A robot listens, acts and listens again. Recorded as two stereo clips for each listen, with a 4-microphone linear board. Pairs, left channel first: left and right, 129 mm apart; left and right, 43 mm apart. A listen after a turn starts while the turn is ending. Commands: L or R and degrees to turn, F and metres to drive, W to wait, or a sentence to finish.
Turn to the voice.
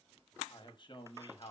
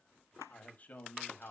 L35
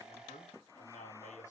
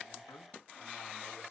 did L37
W
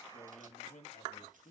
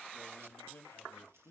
L110
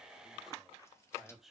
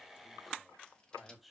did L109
Facing the man speaking.